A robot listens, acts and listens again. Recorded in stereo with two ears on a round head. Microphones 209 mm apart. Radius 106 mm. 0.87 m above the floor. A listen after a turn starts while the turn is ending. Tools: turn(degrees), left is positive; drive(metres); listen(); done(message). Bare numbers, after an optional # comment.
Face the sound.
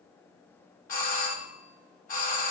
# The doorbell: about 35° left or 145° left.
turn(35)
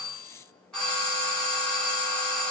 done("Facing the doorbell, 1 to 2 m away.")